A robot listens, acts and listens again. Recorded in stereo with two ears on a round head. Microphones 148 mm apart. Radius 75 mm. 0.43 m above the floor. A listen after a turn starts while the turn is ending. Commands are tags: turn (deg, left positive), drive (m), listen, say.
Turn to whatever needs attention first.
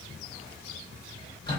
<listen/>
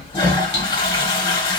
<listen/>
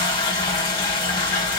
<say>I can't make out anything urgent to turn to.</say>